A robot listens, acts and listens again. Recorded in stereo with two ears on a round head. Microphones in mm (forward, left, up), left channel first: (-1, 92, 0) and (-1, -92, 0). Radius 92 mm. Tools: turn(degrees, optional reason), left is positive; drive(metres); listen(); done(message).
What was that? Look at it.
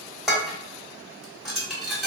turn(degrees=30)
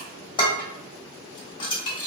turn(degrees=155, reason="So it is at 155° left.")
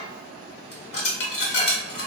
turn(degrees=55, reason="The dishes clattering is now 55° left.")
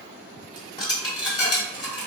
turn(degrees=25, reason="The dishes clattering is now 25° left.")
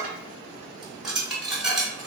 done("Facing the dishes clattering.")